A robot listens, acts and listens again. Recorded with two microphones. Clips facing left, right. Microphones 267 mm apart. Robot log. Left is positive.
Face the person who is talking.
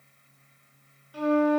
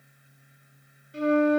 cmd idle
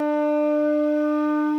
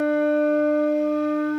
cmd idle
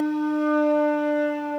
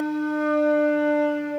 end: I can't make out anyone speaking, only a flute.